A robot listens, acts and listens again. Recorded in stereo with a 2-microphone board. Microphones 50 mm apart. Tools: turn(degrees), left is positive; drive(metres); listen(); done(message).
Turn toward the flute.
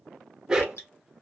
listen()
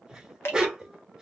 listen()
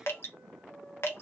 turn(degrees=20)
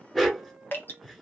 listen()
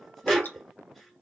listen()
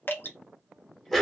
done("I heard a flute, but can't make it out now. It was about straight ahead or 140° left.")